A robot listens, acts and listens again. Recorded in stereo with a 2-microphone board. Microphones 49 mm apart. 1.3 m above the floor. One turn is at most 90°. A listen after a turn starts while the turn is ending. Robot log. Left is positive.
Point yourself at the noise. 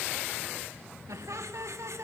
cmd yaw -90
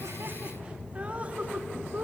note: So it is at 35° right.
cmd yaw -35
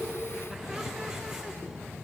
cmd idle
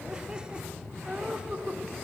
note: The laughter is now 20° right.
cmd yaw -20
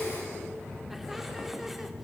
cmd idle
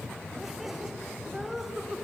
end: Found it: laughter, straight ahead, 2 to 4 m away.